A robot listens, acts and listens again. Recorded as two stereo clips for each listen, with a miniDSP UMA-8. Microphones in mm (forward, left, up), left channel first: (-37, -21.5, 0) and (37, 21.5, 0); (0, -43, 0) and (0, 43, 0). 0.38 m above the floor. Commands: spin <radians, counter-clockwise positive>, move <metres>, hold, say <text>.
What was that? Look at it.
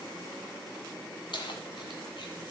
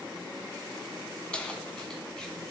spin -2.97
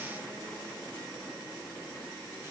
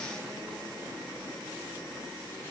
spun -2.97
hold
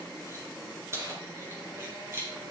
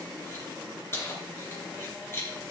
spin -0.52
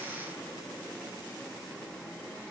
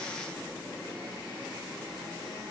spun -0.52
hold
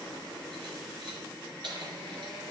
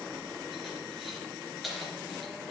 say Facing the keys jangling.